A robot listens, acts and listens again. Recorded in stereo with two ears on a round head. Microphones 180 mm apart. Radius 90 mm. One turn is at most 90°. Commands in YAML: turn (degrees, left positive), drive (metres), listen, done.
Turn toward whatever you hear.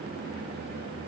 listen: true
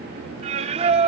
turn: -35
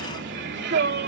turn: -90
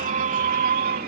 turn: -45
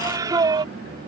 turn: -20
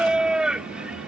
done: "Found it: singing, straight ahead."